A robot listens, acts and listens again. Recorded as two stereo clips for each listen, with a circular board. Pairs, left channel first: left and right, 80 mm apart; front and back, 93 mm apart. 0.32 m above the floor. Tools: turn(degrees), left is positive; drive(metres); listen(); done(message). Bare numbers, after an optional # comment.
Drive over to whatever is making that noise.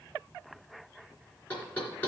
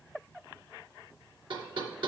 # The knocking: 160° left.
turn(160)
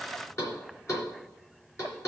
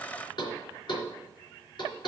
# The knocking is now 35° left.
turn(35)
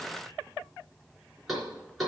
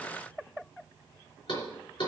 drive(1.0)
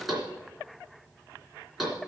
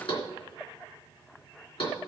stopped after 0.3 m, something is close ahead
done("Blocked. The knocking is further on, straight ahead.")